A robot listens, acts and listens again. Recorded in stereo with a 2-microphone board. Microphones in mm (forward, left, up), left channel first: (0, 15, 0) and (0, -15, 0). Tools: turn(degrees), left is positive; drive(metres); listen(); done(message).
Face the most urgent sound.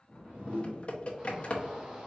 turn(degrees=-20)
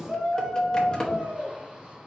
turn(degrees=-145)
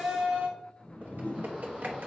turn(degrees=-35)
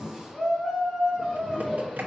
turn(degrees=-15)
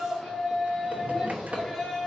done("Facing the shout.")